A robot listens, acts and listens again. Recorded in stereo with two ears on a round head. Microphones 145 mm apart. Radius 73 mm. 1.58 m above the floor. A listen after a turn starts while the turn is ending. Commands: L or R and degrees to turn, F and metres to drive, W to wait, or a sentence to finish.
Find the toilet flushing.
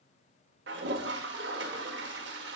R90
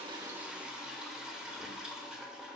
Facing the toilet flushing, under 1 m away.